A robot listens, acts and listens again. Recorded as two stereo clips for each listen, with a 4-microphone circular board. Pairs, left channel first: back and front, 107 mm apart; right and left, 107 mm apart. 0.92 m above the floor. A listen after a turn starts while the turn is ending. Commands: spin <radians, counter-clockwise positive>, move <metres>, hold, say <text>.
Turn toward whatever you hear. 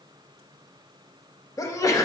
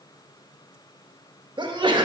spin 2.18
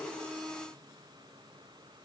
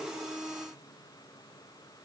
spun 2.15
say I heard a sneeze from this way, but can't make it out now.